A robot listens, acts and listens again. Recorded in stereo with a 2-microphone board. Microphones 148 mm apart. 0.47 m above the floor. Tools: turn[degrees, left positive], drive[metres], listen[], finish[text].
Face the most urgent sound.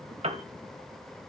Action: listen[]
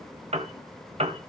Action: listen[]
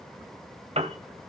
Action: finish[I can't make out anything urgent to turn to.]